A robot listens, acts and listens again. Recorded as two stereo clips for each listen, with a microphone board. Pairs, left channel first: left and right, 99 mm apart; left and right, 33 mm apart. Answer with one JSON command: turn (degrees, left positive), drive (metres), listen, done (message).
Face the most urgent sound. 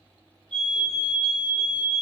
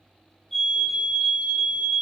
{"turn": 30}
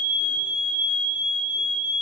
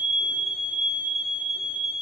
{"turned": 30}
{"turn": -15}
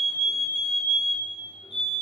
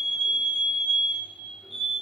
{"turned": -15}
{"done": "Found it: a fire alarm, straight ahead."}